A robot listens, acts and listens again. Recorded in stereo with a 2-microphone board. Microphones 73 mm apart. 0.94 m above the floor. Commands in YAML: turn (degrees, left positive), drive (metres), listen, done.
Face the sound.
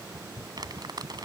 turn: -60
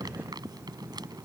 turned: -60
listen: true
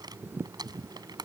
turn: -65
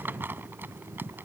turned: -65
turn: -25
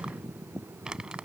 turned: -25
turn: -10
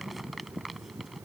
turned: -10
done: "Facing the crumpling."